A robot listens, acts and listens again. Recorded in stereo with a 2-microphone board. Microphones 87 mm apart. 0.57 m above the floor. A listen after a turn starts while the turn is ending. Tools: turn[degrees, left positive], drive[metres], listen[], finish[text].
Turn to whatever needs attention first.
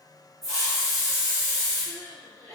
Thought: The crying: about 35° right or 145° right.
Action: turn[-35]
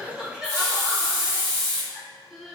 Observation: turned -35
Action: finish[Facing the crying, under 1 m away.]